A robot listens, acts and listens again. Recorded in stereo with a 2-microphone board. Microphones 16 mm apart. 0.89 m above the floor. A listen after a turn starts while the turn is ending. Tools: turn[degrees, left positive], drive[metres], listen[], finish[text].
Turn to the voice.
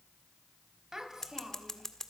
Thought: The child speaking: about 35° right or 145° right.
Action: turn[-35]
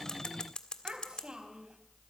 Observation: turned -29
Thought: So it is at 115° right.
Action: turn[-115]
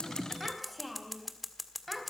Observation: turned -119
Action: finish[Facing the child speaking, 2 to 4 m away.]